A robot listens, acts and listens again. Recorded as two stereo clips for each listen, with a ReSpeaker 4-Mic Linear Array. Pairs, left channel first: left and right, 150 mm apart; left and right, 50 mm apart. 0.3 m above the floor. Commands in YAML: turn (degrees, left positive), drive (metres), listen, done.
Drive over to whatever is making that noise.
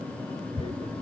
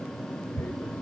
turn: 40
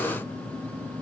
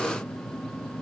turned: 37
listen: true
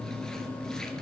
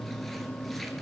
listen: true
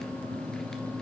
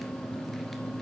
done: "I heard tearing paper, but can't make it out now. It was about 5° left or 105° left. I did not reach it."